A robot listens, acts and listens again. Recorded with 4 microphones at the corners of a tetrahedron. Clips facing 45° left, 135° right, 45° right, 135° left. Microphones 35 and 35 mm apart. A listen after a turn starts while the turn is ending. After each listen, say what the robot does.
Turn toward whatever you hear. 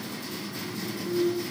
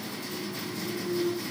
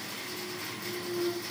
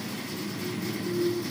Turn 60° right.
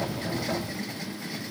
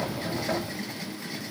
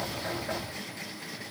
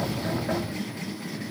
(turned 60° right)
I heard a clunk from this way, but can't make it out now.